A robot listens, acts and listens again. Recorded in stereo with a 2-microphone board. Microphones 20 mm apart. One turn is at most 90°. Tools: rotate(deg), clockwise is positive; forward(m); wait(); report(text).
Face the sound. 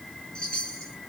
rotate(-50)
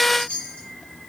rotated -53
rotate(-80)
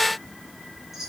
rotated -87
rotate(10)
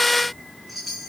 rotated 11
report("Facing the chime, 2 to 4 m away.")